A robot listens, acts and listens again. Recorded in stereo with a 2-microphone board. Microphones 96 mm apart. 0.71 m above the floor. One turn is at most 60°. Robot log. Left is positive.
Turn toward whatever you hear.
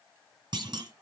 note: The clunk: about 50° right or 130° right.
cmd yaw -50
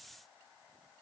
cmd idle
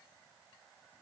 end: I heard a clunk, but can't make it out now. It was about straight ahead or 80° right.